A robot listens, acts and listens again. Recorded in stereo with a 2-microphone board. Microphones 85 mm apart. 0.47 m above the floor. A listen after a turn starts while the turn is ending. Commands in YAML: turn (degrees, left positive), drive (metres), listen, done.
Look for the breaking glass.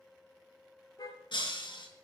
turn: 90
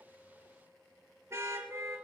done: "Facing where the breaking glass came from. I can't hear it now."